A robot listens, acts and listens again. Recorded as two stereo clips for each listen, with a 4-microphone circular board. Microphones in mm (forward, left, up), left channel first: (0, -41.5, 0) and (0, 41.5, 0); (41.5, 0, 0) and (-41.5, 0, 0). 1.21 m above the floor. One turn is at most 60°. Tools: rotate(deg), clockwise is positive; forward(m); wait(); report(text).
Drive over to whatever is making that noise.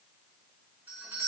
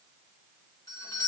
rotate(-25)
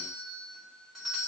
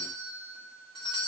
forward(1.0)
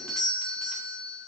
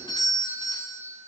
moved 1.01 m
forward(1.0)
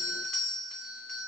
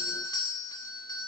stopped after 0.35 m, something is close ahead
report("Arrived at the doorbell, straight ahead.")